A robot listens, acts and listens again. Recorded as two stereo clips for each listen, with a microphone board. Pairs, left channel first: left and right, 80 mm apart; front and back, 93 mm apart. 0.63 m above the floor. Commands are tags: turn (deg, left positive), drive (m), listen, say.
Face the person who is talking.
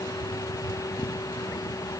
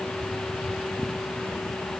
<listen/>
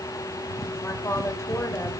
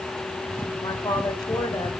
<turn deg="35"/>
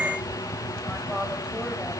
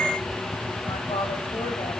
<listen/>
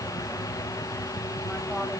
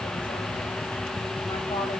<listen/>
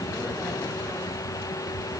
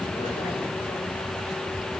<say>I heard a woman speaking from this way, but can't make it out now.</say>